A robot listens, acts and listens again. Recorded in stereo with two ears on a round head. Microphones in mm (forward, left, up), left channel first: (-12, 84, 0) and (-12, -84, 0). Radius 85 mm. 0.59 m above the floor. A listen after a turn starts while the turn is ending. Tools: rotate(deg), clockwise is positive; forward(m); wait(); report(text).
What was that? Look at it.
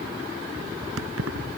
rotate(90)
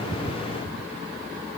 wait()
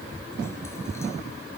wait()
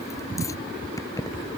rotate(-20)
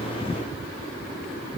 wait()
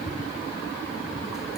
wait()
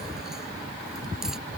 report("Facing where the keys jangling came from. I can't hear it now.")